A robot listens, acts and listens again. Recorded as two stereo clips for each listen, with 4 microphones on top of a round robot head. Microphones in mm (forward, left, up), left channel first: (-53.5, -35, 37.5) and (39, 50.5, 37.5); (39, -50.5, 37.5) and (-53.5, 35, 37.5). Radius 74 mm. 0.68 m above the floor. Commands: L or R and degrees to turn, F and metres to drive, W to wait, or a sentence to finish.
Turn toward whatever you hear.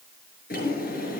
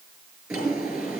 R140
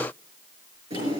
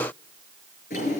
R10
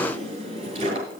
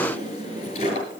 Facing the drawer, over 4 m away.